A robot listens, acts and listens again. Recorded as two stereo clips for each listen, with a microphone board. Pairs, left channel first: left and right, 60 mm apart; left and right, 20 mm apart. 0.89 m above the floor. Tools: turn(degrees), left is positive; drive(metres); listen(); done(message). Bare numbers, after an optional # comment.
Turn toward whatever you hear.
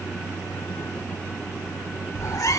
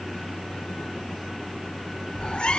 # The cat meowing: about 65° left or 115° left.
turn(65)
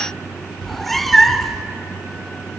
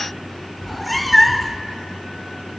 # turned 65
done("Facing the cat meowing.")